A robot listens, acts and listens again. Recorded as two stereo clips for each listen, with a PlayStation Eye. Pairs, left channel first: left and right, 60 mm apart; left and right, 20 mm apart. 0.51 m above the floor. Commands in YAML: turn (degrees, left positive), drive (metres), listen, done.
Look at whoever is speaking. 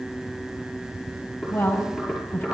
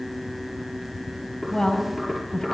turn: 25
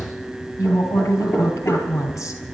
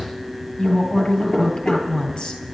turn: 125
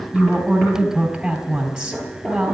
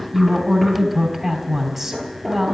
done: "Facing the woman speaking, 2 to 4 m away."